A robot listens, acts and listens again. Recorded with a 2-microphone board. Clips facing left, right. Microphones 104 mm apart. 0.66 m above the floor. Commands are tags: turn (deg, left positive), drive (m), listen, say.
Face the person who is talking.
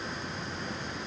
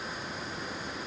<listen/>
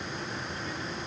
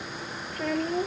<turn deg="-70"/>
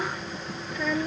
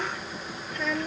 <say>Found it: a child speaking, straight ahead.</say>